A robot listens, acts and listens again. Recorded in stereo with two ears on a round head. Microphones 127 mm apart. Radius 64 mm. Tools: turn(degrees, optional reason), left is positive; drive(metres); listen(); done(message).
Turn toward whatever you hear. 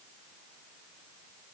listen()
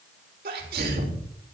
turn(degrees=-90)
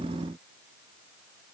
done("I heard a sneeze from this way, but can't make it out now.")